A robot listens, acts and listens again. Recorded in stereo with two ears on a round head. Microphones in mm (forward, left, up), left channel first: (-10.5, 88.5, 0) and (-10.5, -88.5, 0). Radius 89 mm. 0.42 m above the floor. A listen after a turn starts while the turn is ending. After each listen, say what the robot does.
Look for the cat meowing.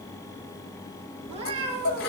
Turn 30° right.
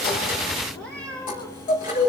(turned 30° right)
Facing the cat meowing.